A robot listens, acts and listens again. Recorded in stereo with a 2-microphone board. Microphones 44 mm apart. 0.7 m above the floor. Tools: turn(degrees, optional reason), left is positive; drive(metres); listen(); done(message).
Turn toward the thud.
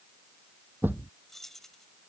turn(degrees=-50, reason="The thud: about 50° right or 130° right.")
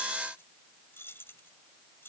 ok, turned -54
listen()
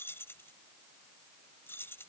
done("I heard a thud, but can't make it out now. It was about 5° left or 75° right.")